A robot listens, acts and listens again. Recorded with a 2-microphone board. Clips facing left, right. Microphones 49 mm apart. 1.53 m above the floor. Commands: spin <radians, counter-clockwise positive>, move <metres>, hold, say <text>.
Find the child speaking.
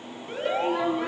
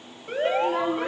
spin -0.44
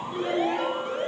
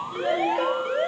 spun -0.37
say Facing the child speaking, 2 to 4 m away.